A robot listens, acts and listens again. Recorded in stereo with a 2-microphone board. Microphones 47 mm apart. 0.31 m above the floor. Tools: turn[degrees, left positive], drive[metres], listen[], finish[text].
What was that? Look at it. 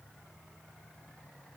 Action: listen[]
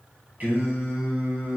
Thought: The singing: about 45° right or 135° right.
Action: turn[-45]
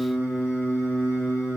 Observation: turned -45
Thought: So it is at 60° right.
Action: turn[-60]
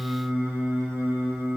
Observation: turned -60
Action: finish[Facing the singing, 2 to 4 m away.]